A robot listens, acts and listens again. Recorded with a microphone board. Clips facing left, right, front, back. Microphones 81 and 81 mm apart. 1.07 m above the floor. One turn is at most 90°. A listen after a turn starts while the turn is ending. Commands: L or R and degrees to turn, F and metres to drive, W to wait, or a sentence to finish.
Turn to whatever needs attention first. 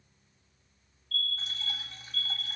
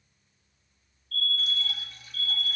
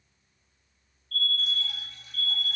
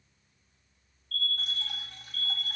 L55
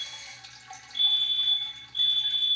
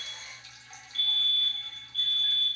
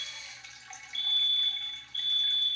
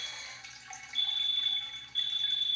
Facing the fire alarm, 2 to 4 m away.